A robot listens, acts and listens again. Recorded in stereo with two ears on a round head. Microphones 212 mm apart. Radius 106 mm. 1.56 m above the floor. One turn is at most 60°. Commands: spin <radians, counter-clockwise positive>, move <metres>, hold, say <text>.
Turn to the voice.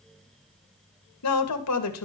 spin 1.05
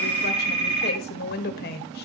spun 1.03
spin 0.79
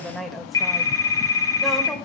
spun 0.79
say Facing the woman speaking, 2 to 4 m away.